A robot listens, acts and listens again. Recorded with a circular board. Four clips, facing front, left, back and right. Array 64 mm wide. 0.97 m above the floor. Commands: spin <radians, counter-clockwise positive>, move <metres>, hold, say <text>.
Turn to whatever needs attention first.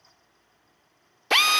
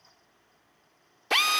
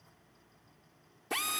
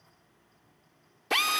hold
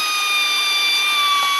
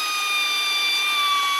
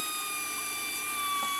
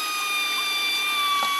hold
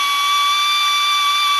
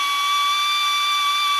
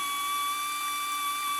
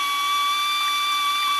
say I can't make out anything urgent, only a drill.